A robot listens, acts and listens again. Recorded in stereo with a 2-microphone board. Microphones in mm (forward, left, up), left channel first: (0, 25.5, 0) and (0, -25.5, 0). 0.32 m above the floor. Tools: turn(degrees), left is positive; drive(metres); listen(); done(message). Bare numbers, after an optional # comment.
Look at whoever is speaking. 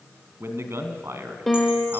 # The man speaking: about 65° right or 115° right.
turn(-65)
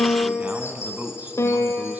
# So it is at 40° right.
turn(-40)
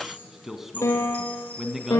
done("Facing the man speaking.")